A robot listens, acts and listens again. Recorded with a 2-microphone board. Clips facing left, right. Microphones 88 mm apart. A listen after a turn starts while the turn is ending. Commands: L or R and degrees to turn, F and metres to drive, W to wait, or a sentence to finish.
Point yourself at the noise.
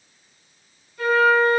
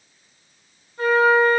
R35
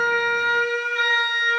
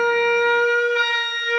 R110
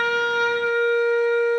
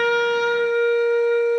R30
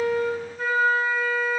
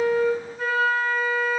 Found it: a flute, straight ahead, 2 to 4 m away.